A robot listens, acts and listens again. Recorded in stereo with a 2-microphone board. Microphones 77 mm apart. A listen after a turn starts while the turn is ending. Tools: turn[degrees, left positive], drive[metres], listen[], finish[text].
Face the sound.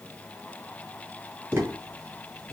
Thought: The tapping: about 35° right or 145° right.
Action: turn[-35]
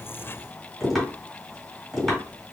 Action: finish[Found it: tapping, straight ahead, 2 to 4 m away.]